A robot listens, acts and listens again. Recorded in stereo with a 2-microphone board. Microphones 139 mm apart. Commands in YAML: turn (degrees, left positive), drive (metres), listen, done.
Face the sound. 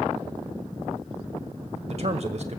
turn: -55
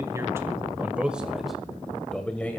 turn: 10
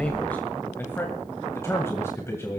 turn: 20
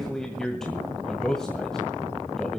done: "Found it: a man speaking, straight ahead, 2 to 4 m away."